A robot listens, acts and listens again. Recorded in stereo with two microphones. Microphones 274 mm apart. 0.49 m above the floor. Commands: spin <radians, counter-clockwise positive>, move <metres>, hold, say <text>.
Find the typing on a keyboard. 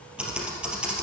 spin -0.52
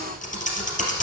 spin 0.52
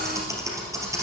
spin -0.17
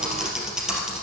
say Facing the typing on a keyboard, 2 to 4 m away.